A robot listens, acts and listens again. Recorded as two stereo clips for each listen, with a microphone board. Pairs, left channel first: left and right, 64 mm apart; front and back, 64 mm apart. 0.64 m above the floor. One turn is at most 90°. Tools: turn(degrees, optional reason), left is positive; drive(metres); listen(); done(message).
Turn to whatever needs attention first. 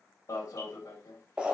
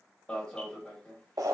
turn(degrees=70, reason="The alarm: 70° left.")
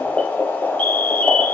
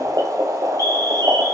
turn(degrees=25, reason="The alarm is now 25° left.")
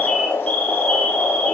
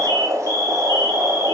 turn(degrees=20, reason="The alarm is now 20° left.")
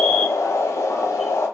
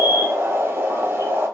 listen()
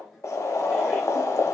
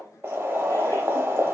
listen()
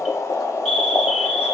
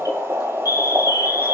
done("Facing the alarm, 1 to 2 m away.")